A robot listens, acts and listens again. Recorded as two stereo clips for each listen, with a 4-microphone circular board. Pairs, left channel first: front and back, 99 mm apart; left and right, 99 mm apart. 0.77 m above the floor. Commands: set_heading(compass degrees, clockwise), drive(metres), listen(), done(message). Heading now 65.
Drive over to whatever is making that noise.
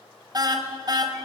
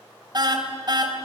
set_heading(200)
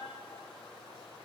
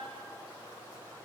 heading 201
listen()
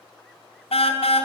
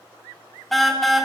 drive(1.0)
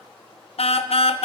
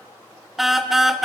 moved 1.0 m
drive(1.0)
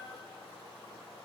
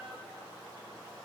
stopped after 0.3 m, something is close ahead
listen()
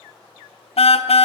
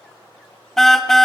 done("I am next to the car horn.")